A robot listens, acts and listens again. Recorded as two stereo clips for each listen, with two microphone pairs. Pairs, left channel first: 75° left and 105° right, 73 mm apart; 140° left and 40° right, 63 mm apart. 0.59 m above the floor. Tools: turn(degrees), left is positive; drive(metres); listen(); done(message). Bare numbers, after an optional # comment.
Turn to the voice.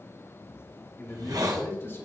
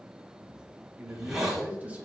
# The man speaking: 25° left.
turn(25)
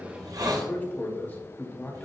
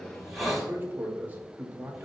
# The man speaking is now 15° left.
turn(15)
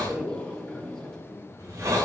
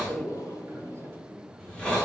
done("Found it: a man speaking, straight ahead, 2 to 4 m away.")